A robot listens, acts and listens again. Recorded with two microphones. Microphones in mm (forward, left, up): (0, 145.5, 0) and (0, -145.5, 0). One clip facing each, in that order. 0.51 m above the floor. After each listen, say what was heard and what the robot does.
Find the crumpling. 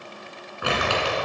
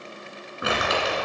The crumpling: about 25° right or 155° right. Turn 25° right.
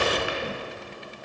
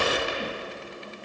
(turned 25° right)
So it is at 135° right. Turn 135° right.
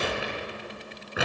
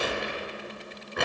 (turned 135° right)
Facing the crumpling.